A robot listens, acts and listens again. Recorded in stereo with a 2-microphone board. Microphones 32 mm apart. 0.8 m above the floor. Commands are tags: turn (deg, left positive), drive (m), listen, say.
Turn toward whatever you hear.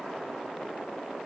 <listen/>
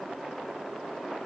<listen/>
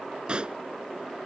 <turn deg="-35"/>
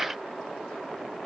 <listen/>
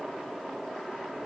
<say>I heard a pop, but can't make it out now. It was about straight ahead or 110° right.</say>